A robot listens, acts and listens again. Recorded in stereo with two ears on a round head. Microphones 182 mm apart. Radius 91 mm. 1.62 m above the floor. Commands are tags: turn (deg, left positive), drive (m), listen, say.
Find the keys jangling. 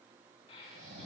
<listen/>
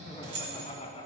<turn deg="-55"/>
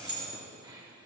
<say>Found it: keys jangling, straight ahead.</say>